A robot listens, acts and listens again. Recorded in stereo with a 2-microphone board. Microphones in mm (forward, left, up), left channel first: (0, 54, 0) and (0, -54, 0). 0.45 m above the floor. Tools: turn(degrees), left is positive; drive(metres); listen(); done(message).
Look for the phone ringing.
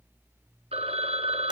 turn(degrees=-60)
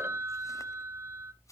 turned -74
turn(degrees=-25)
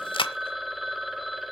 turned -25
done("Found it: a phone ringing, straight ahead, under 1 m away.")